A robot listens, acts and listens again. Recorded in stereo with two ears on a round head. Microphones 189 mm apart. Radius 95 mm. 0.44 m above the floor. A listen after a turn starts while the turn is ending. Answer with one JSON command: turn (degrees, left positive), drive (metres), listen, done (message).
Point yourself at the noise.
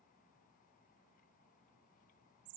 {"listen": true}
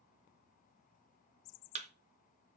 {"turn": -30}
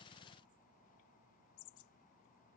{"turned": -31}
{"listen": true}
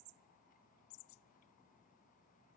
{"done": "I heard a thud, but can't make it out now. It was about straight ahead or 120° right."}